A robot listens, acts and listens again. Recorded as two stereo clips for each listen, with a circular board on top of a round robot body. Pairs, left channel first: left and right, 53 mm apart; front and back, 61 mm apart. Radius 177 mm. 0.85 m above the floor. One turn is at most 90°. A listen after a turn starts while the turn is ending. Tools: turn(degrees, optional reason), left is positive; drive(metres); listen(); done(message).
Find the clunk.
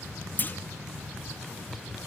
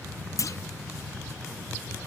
turn(degrees=35, reason="The clunk: 35° left.")
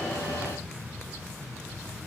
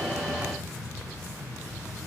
done("I heard a clunk from this way, but can't make it out now.")